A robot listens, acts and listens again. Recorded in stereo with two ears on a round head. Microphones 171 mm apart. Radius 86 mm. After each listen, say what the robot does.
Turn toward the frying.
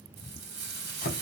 Turn 60° right.
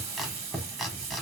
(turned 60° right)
Turn 40° right.
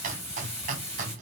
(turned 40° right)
Turn 15° left.
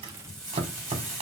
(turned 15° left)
Facing the frying.